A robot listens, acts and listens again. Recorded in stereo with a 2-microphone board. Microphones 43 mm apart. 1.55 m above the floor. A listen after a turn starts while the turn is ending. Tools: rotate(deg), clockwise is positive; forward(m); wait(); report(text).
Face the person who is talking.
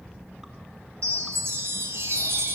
wait()
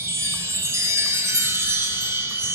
wait()
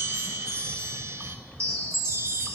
report("I can't make out anyone speaking, only a chime.")